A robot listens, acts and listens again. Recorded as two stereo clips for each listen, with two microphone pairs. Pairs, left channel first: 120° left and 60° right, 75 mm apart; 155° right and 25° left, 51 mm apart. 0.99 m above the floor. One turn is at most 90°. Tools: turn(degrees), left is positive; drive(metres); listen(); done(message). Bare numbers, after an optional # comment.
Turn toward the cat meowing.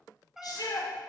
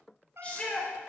# The cat meowing: 20° left.
turn(20)
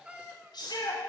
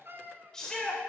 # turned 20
# The cat meowing is now 10° left.
turn(10)
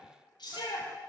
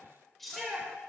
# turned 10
listen()
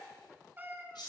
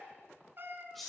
done("Found it: a cat meowing, straight ahead.")